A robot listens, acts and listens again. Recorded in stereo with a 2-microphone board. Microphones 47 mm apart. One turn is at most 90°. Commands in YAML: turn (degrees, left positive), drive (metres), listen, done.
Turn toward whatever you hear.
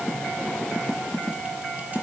listen: true
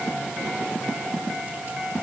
listen: true
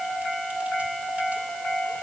done: "I can't make out anything."